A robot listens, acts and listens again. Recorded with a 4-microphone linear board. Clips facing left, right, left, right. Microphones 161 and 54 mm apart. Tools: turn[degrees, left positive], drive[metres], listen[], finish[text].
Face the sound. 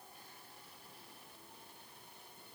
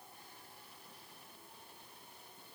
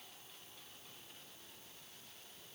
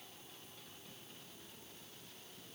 Action: listen[]
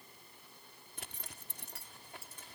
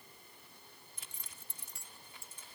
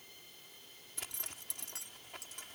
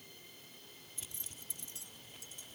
Thought: The zipper: about 70° left or 110° left.
Action: turn[70]
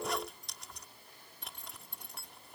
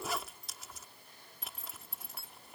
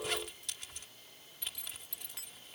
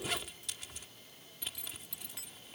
Action: finish[Found it: a zipper, straight ahead.]